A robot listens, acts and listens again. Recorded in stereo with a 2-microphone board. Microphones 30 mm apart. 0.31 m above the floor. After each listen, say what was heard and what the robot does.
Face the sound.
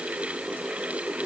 Keep listening.
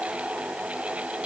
Keep listening.
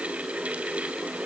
I can't make out anything.